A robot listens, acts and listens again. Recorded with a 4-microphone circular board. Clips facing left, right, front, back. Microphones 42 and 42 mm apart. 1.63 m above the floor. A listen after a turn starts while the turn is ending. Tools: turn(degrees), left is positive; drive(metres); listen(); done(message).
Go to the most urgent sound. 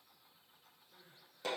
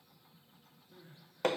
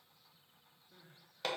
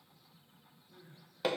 turn(degrees=-20)
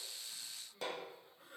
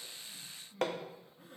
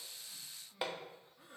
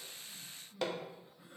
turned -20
drive(metres=1.0)
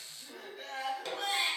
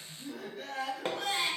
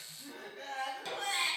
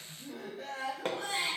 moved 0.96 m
drive(metres=1.0)
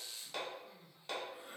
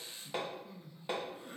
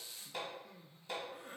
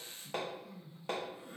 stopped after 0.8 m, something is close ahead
turn(degrees=10)
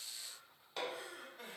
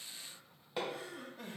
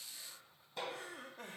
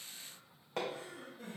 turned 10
done("I am next to the crying.")